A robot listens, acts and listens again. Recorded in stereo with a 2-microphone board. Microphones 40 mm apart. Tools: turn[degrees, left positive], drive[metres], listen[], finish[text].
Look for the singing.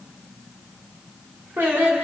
Thought: The singing: about 75° right or 105° right.
Action: turn[-75]
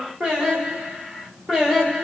Thought: So it is at 10° right.
Action: turn[-10]
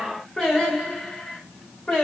Thought: The singing is now 10° left.
Action: turn[10]
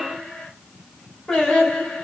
Action: finish[Found it: singing, straight ahead, 2 to 4 m away.]